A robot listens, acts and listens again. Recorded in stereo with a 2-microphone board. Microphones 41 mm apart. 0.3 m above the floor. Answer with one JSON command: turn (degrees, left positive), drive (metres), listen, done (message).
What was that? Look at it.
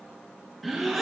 {"turn": 30}
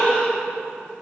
{"turn": 150}
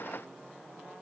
{"done": "Facing where the gasp came from. I can't hear it now."}